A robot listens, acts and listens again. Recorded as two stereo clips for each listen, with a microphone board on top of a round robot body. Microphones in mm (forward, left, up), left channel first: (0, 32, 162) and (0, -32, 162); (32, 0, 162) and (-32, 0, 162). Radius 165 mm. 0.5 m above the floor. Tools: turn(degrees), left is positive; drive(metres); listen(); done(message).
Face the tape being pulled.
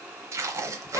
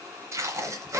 turn(degrees=-135)
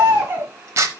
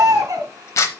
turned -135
turn(degrees=-45)
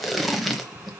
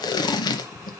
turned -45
done("Facing the tape being pulled, under 1 m away.")